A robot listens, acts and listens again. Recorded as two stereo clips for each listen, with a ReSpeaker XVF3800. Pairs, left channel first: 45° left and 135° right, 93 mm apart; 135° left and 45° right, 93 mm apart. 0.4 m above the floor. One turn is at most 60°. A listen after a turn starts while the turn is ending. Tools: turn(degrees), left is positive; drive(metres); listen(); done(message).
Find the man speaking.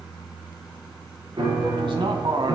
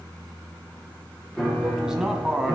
turn(degrees=-60)
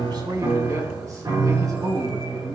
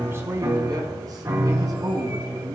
turn(degrees=-60)
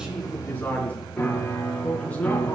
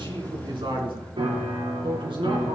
turn(degrees=-30)
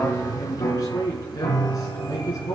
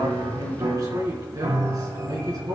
done("Found it: a man speaking, straight ahead.")